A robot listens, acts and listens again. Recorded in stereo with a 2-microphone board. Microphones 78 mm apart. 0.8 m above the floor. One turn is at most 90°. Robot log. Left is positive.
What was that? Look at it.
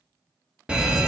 cmd yaw -30
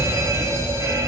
note: So it is at 135° right.
cmd yaw -90
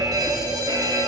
note: The fire alarm is now 70° right.
cmd yaw -70
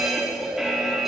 end: Found it: a fire alarm, straight ahead.